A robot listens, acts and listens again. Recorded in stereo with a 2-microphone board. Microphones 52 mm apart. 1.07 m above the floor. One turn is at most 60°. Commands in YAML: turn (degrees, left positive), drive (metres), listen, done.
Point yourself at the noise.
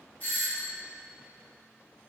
turn: 30
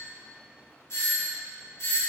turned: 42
turn: 60
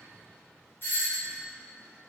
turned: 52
turn: 50
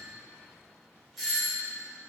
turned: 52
done: "Found it: a doorbell, straight ahead, 1 to 2 m away."